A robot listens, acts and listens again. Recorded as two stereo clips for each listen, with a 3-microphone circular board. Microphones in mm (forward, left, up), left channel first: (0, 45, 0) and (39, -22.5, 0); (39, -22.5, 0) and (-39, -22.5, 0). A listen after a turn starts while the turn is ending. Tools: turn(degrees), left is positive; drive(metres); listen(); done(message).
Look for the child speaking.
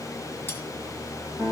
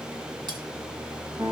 listen()
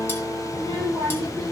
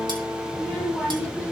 turn(degrees=-85)
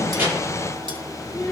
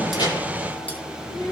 turn(degrees=20)
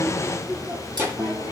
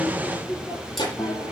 done("Facing the child speaking, over 4 m away.")